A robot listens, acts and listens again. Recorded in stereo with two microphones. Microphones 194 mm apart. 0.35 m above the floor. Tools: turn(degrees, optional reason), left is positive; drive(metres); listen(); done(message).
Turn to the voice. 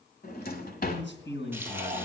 turn(degrees=70, reason="The man speaking: about 70° left or 110° left.")
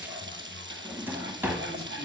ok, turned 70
listen()
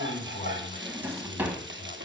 turn(degrees=40, reason="So it is at 40° left.")
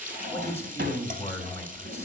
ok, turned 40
turn(degrees=10, reason="The man speaking is now 10° left.")
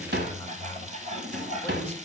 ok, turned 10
done("Found it: a man speaking, straight ahead, 1 to 2 m away.")